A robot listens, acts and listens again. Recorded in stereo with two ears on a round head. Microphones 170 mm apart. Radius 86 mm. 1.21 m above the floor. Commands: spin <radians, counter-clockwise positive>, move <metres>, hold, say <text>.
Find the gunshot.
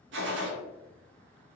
spin -1.22
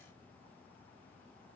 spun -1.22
hold
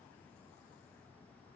say I heard a gunshot, but can't make it out now. It was about straight ahead or 40° right.